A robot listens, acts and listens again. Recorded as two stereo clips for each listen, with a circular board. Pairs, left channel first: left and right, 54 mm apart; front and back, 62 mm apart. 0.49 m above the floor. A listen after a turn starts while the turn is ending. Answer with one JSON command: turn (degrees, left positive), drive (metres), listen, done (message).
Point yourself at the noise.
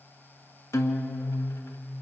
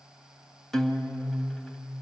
{"turn": 80}
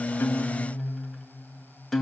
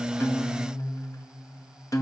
{"done": "Found it: a guitar, straight ahead."}